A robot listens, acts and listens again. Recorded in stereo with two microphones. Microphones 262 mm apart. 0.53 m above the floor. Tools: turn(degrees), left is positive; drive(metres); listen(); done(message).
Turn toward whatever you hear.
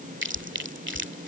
turn(degrees=-45)
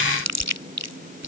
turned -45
turn(degrees=-90)
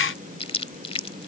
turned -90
turn(degrees=20)
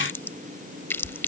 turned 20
turn(degrees=10)
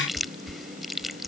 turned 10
done("Facing the chewing.")